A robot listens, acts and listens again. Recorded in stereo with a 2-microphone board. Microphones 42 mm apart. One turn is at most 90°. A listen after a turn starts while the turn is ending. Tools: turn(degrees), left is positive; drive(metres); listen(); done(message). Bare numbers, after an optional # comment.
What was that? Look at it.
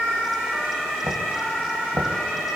# The knocking: about 70° right or 110° right.
turn(-70)
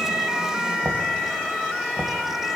# So it is at 30° right.
turn(-30)
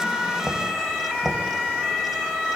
done("Facing the knocking, 1 to 2 m away.")